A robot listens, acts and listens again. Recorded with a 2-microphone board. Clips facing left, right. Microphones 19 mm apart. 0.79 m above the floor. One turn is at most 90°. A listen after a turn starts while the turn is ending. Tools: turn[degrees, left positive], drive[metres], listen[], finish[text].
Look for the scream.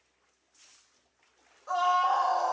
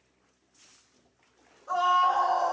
Thought: The scream: about 70° left or 110° left.
Action: turn[70]
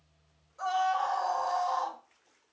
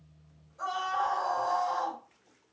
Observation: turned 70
Thought: So it is at 30° left.
Action: turn[30]
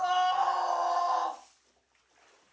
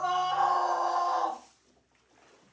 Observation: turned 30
Action: finish[Facing the scream, 1 to 2 m away.]